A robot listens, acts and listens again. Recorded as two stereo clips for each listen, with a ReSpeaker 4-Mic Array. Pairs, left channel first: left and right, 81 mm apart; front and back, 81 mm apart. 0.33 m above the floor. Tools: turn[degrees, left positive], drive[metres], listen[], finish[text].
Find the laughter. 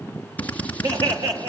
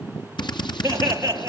Thought: The laughter: 125° right.
Action: turn[-125]
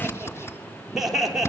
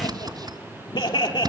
Action: finish[Found it: laughter, straight ahead, over 4 m away.]